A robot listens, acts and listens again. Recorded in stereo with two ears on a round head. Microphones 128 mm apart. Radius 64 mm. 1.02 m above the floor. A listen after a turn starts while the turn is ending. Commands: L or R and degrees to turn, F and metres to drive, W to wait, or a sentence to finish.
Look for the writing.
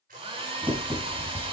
R20
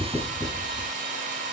W
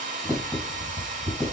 Found it: writing, straight ahead, over 4 m away.